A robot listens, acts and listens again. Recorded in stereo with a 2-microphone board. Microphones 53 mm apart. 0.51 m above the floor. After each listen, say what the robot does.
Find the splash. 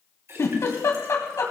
Turn 60° right.
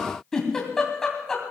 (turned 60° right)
Keep listening.
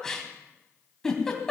I heard a splash, but can't make it out now. It was about straight ahead or 60° right.